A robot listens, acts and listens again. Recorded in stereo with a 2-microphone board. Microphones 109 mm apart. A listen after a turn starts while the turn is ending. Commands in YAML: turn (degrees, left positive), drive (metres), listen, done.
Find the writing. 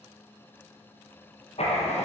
turn: 65
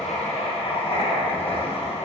turn: 55
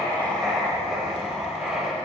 done: "Found it: writing, straight ahead."